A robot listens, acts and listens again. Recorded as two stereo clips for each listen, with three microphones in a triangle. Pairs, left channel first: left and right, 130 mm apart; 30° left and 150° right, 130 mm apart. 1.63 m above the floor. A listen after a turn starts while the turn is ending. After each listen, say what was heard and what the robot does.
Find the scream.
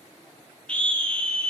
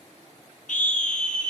The scream: 10° left. Turn 10° left.
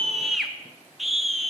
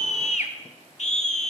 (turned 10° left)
Found it: a scream, straight ahead, 1 to 2 m away.